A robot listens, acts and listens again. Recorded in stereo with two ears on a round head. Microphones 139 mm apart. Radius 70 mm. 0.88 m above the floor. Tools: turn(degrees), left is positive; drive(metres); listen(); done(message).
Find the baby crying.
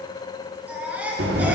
turn(degrees=-30)
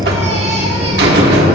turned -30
listen()
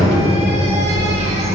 listen()
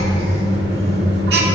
done("I heard a baby crying, but can't make it out now. It was about 20° left or 140° right.")